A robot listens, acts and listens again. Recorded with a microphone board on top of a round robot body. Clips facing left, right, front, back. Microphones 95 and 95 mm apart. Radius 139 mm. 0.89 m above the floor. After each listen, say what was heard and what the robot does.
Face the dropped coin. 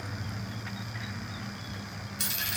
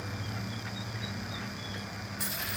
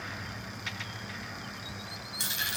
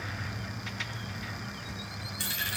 The dropped coin: 70° left. Turn 70° left.
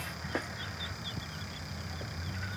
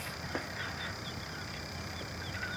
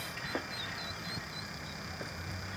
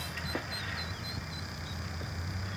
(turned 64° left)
I heard a dropped coin from this way, but can't make it out now.